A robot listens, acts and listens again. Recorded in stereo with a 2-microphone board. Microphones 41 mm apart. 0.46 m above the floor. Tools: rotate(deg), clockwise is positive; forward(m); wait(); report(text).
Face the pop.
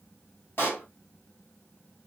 rotate(-55)
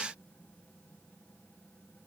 wait()
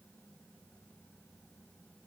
report("I heard a pop, but can't make it out now. It was about straight ahead or 70° left.")